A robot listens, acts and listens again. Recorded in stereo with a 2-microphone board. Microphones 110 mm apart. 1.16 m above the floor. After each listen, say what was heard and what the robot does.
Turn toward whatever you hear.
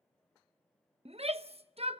The shout: about 65° right or 115° right. Turn 65° right.
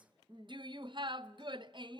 So it is at 45° right. Turn 45° right.
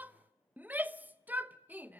The shout is now 15° right. Turn 15° right.
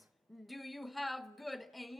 Facing the shout, under 1 m away.